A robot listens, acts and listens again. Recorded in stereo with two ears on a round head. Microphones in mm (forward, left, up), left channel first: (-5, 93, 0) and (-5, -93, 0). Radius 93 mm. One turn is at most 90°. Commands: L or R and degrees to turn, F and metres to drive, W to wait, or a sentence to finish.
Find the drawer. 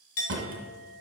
R60
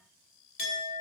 W
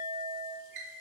R55
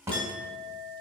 R15
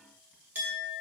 W
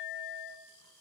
W
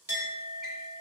Facing where the drawer came from. I can't hear it now.